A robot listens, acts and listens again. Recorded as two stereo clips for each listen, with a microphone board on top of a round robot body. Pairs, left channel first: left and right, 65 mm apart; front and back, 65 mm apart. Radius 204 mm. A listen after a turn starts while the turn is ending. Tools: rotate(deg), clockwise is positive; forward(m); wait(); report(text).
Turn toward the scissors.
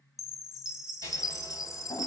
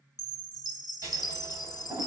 rotate(-130)
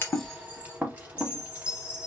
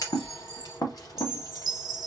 rotate(25)
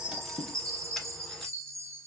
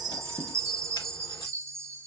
wait()
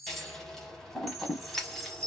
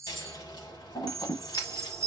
report("Facing the scissors, under 1 m away.")